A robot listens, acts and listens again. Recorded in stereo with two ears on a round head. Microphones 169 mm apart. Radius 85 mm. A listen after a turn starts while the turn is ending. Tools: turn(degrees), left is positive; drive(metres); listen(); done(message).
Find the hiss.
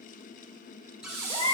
turn(degrees=-20)
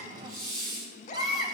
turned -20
done("Facing the hiss.")